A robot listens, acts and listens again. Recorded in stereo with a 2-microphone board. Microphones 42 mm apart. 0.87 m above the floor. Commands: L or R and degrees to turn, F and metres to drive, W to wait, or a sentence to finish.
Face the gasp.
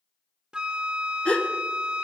L20
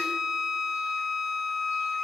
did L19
W
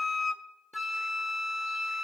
I heard a gasp, but can't make it out now. It was about 5° left or 140° left.